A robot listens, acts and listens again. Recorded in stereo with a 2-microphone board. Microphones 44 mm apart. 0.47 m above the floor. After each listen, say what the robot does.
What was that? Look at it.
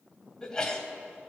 Turn 15° left.
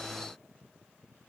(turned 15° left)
Keep listening.
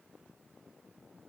I heard a sneeze, but can't make it out now. It was about straight ahead or 150° left.